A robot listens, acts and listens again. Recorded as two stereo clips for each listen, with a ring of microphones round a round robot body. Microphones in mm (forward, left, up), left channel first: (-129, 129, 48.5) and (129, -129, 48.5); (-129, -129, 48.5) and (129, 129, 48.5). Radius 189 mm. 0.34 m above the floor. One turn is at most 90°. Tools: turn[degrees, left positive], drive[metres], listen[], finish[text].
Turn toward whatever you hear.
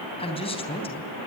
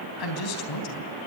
Thought: The man speaking: 150° right.
Action: turn[-90]
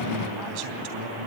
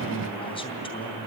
Thought: The man speaking is now 60° right.
Action: turn[-60]
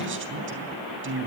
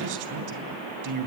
Thought: The man speaking is now 10° left.
Action: turn[10]
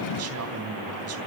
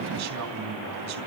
Action: finish[Found it: a man speaking, straight ahead.]